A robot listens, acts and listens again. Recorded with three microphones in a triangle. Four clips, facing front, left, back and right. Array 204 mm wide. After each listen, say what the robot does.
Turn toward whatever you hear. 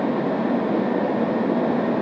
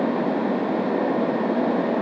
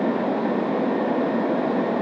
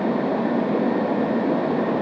Keep listening.
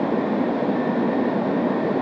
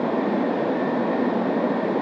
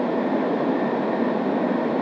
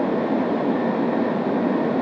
Keep listening.
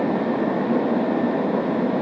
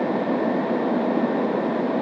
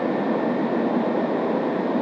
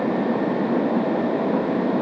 I can't make out anything.